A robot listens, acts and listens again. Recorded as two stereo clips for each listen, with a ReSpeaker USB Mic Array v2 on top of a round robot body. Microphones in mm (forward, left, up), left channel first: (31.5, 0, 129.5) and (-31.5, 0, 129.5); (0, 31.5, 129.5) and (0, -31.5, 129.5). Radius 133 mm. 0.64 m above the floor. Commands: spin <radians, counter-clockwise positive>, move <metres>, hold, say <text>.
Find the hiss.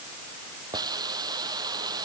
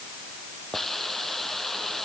spin 3.05
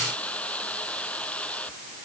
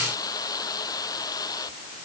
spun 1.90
spin 1.22
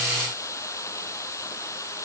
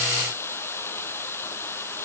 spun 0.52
spin 0.70
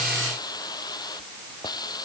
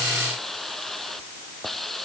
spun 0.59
say Facing the hiss.